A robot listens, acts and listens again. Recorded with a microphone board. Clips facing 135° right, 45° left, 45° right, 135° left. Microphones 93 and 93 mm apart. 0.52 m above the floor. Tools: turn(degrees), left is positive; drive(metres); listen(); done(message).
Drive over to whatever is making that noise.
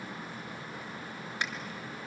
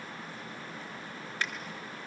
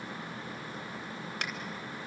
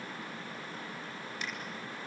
turn(degrees=-65)
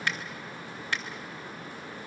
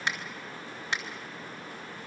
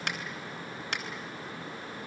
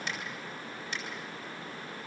turn(degrees=-25)
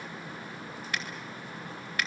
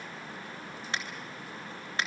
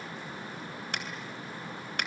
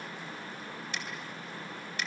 turn(degrees=-20)
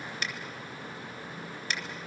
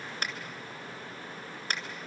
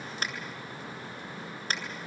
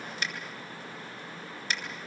drive(metres=1.0)
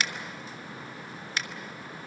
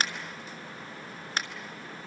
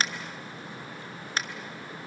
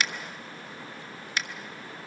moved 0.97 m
drive(metres=1.0)
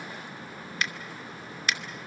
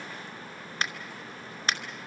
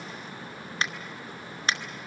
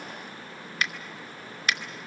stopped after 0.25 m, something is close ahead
done("I am next to the finger snap.")